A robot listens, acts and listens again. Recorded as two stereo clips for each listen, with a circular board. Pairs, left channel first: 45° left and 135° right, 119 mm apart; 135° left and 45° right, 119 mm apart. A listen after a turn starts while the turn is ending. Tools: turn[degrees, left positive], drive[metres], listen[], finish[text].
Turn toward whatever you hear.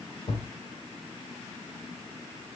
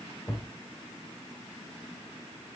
Thought: The thud: 65° left.
Action: turn[65]
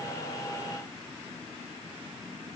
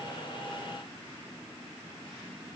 Action: finish[I heard a thud from this way, but can't make it out now.]